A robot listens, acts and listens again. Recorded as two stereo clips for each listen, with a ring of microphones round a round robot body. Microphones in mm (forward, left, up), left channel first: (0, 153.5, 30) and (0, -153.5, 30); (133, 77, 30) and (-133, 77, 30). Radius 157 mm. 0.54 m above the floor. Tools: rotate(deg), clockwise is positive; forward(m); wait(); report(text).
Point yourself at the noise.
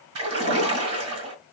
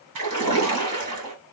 rotate(140)
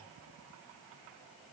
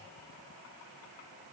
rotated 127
rotate(10)
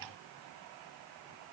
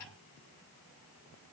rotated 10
report("I heard a splash from this way, but can't make it out now.")